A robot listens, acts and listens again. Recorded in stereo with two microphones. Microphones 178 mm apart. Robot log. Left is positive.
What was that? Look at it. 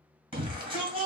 note: The shout: about 30° right or 150° right.
cmd yaw -30
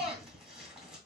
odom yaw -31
end: Found it: a shout, straight ahead, 2 to 4 m away.